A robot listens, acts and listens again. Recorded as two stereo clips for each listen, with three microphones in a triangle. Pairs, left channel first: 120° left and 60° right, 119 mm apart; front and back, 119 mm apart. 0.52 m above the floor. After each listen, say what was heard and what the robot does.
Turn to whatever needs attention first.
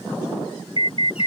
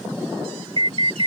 The alarm: 150° left. Turn 150° left.
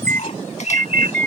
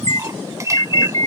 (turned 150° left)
The alarm is now 50° left. Turn 50° left.
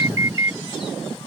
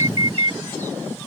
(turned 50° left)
Found it: an alarm, straight ahead.